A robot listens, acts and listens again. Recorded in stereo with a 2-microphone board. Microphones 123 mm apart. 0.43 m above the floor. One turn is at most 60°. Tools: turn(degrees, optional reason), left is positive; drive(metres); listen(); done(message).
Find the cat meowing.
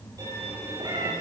turn(degrees=-35, reason="The cat meowing: about 35° right or 145° right.")
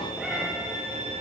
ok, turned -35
done("Facing the cat meowing, over 4 m away.")